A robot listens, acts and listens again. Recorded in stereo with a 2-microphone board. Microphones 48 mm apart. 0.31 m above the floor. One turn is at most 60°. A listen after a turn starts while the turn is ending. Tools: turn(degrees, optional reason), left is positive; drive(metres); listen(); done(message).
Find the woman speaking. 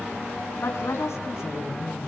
turn(degrees=60, reason="The woman speaking: about 70° left or 110° left.")
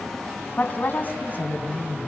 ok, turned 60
turn(degrees=40, reason="So it is at 40° left.")
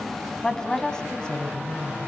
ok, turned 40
turn(degrees=20, reason="The woman speaking is now 20° left.")
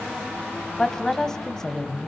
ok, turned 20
turn(degrees=10, reason="The woman speaking is now 10° left.")
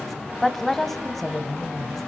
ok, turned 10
done("Facing the woman speaking, 1 to 2 m away.")